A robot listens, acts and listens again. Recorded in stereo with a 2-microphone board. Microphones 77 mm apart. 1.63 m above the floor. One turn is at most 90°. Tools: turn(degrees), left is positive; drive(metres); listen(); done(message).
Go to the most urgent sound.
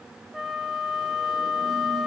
listen()
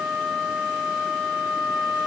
listen()
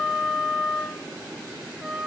done("I can't make out anything urgent to turn to.")